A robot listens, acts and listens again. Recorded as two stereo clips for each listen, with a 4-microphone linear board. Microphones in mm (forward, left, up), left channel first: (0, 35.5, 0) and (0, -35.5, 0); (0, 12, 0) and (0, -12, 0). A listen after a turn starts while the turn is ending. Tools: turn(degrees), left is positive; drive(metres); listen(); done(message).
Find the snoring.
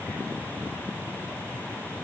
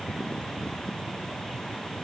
listen()
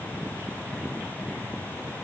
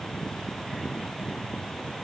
listen()
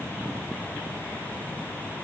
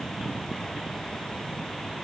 done("I can't make out snoring to turn to.")